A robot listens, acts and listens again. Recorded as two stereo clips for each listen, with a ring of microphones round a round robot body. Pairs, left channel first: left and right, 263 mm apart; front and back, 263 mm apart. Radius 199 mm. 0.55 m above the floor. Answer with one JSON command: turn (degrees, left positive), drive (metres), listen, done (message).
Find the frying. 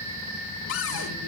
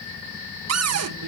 {"listen": true}
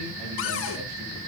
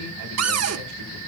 {"listen": true}
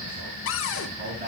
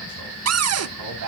{"done": "I can't make out frying to turn to."}